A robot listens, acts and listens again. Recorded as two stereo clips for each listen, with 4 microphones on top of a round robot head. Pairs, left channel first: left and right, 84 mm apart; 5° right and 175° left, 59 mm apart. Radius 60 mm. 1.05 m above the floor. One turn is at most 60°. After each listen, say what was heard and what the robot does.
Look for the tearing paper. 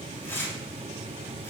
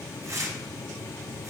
The tearing paper: 150° left. Turn 60° left.
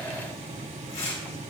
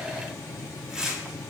The tearing paper is now 95° left. Turn 60° left.
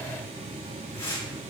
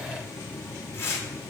The tearing paper is now 35° left. Turn 35° left.
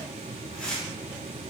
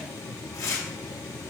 The tearing paper is now 10° left. Turn 10° left.
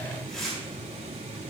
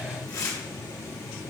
Found it: tearing paper, straight ahead, 2 to 4 m away.